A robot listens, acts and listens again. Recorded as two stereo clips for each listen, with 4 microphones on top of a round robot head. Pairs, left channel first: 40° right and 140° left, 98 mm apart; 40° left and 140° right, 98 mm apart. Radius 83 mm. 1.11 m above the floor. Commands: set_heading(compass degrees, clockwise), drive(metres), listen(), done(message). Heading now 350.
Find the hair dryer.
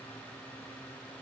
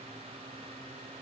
listen()
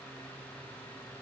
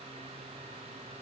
listen()
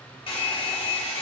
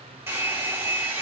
set_heading(65)
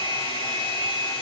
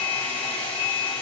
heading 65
done("Found it: a hair dryer, straight ahead.")